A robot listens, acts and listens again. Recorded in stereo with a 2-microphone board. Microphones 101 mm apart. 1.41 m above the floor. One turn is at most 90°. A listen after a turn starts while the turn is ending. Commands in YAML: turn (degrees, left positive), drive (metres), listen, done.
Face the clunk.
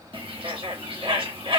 listen: true
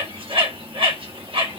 listen: true
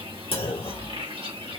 turn: 70
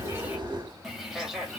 listen: true
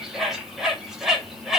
done: "I heard a clunk, but can't make it out now. It was about straight ahead or 40° left."